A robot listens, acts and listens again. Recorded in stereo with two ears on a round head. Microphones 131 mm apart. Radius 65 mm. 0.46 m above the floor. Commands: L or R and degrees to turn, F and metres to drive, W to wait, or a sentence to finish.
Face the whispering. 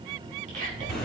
R50
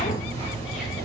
W
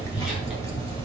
W
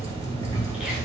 I heard whispering, but can't make it out now. It was about straight ahead or 80° right.